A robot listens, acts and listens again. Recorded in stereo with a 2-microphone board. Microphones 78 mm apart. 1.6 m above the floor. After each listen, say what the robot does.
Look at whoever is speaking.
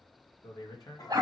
Turn 55° left.
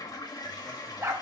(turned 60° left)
Keep listening.
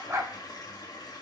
Keep listening.
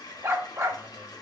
I heard a man speaking, but can't make it out now. It was about 5° right or 65° left.